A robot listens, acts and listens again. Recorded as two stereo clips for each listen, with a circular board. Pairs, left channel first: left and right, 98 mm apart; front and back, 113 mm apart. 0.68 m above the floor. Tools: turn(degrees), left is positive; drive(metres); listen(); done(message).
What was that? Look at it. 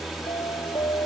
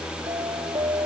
turn(degrees=135)
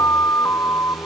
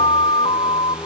turn(degrees=30)
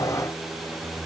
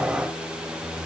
listen()
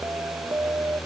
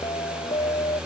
turn(degrees=-25)
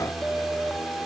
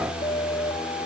turn(degrees=10)
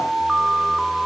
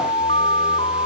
done("Facing the alarm.")